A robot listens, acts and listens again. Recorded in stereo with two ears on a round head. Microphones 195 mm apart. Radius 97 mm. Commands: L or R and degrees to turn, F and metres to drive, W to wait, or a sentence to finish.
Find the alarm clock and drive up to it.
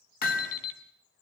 L75
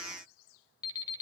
L20
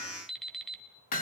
F1.0
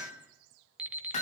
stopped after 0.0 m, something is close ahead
Blocked. The alarm clock is further on, straight ahead.